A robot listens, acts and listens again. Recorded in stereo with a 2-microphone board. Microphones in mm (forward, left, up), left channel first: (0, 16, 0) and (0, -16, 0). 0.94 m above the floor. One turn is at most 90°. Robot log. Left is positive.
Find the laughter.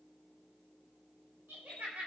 note: The laughter: about 70° right or 110° right.
cmd yaw -70
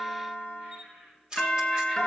note: So it is at 35° right.
cmd yaw -35
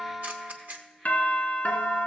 cmd idle
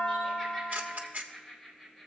end: Found it: laughter, straight ahead.